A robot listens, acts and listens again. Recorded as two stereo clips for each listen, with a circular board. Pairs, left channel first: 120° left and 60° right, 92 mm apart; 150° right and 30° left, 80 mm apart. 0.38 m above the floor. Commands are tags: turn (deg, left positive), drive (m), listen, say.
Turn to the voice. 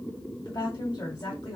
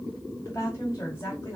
<turn deg="160"/>
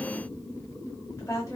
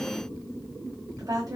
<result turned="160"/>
<turn deg="65"/>
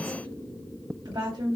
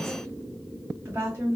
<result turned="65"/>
<turn deg="-20"/>
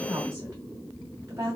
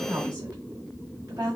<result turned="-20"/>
<say>Facing the woman speaking.</say>